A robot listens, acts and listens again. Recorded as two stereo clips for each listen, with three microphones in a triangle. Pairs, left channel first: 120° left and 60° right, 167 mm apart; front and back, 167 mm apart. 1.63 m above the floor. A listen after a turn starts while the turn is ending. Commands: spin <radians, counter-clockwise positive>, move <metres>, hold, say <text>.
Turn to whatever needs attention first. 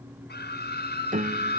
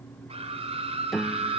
spin 2.18
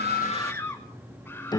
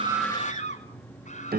spin 0.70
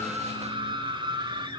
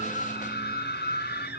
say Found it: a scream, straight ahead, over 4 m away.